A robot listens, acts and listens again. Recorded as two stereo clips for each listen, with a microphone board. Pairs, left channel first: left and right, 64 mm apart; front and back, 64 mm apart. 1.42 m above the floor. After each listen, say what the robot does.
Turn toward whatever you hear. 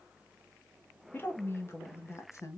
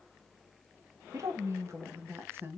Turn 125° left.
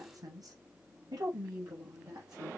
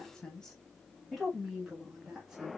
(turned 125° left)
Turn 100° right.
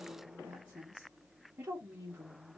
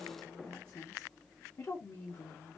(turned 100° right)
Turn 20° right.
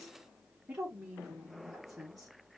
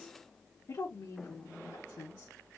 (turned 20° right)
Facing the woman speaking.